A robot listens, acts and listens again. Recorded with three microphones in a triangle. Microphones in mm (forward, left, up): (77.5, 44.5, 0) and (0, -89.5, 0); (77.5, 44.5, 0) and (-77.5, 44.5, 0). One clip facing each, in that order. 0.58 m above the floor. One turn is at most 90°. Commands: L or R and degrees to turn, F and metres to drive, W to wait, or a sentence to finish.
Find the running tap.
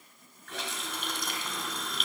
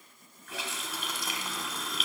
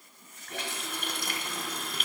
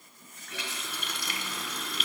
R30
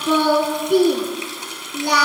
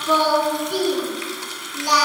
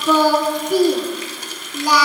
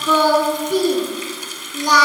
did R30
Found it: a running tap, straight ahead, 1 to 2 m away.